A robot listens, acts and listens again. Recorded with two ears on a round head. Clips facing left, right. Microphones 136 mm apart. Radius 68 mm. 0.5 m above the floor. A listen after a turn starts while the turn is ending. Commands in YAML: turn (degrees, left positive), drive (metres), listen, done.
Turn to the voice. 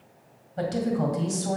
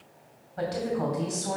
turn: 30
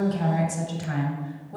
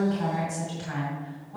turn: 115
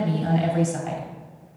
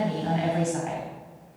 turn: 50
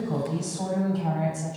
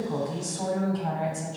done: "Facing the woman speaking, 2 to 4 m away."